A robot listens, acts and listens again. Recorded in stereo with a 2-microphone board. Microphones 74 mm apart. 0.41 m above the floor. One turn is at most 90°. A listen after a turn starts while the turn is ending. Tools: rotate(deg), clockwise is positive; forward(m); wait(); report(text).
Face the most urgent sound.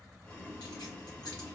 wait()
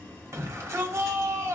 rotate(40)
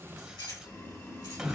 rotate(10)
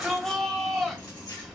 report("Facing the shout, 1 to 2 m away.")